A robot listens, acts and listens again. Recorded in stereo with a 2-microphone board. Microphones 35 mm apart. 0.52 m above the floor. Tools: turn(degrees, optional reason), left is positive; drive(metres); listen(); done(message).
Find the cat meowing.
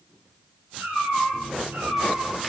turn(degrees=-90)
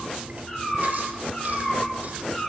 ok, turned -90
turn(degrees=15, reason="So it is at 15° left.")
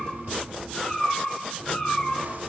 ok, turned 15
turn(degrees=15, reason="The cat meowing is now 15° left.")
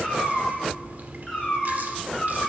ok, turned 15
done("Found it: a cat meowing, straight ahead, 2 to 4 m away.")